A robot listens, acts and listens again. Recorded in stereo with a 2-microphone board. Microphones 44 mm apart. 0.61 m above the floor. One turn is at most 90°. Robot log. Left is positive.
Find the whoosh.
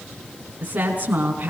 cmd idle
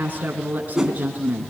cmd yaw -30
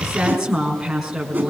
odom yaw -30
cmd idle
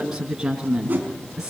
note: So it is at 145° right.
cmd yaw -90
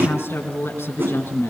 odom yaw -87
note: The whoosh is now 55° right.
cmd yaw -55
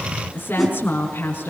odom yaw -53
end: Found it: a whoosh, straight ahead.